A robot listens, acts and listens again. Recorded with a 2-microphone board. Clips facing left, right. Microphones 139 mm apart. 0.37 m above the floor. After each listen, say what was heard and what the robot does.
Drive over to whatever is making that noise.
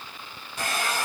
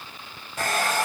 The hair dryer: about 50° right or 130° right. Turn 50° right.
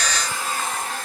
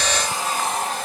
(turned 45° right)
So it is at 85° right. Turn 85° right.
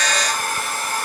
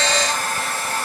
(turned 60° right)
The hair dryer is now 25° right. Turn 25° right.
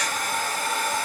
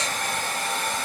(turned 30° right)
Drive 1.0 m forward.
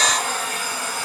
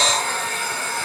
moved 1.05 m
The hair dryer is now 10° left. Turn 10° left.
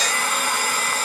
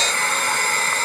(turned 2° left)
The hair dryer is now 10° left. Turn 10° left.
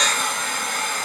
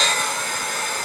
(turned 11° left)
Drive 1.0 m forward.
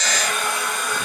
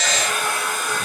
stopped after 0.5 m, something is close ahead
I am next to the hair dryer.